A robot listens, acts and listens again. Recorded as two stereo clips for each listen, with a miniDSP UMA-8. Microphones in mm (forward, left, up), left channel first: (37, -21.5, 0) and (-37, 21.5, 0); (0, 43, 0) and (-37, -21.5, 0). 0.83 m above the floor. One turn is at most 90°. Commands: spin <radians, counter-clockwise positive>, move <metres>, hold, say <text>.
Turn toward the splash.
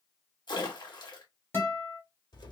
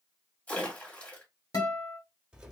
spin -0.17
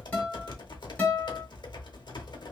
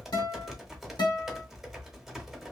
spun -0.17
say I heard a splash from this way, but can't make it out now.